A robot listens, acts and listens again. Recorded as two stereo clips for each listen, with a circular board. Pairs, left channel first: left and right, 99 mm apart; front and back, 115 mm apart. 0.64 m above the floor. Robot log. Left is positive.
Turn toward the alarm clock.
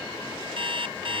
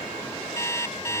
note: The alarm clock: 65° right.
cmd yaw -65
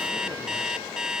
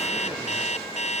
end: Facing the alarm clock.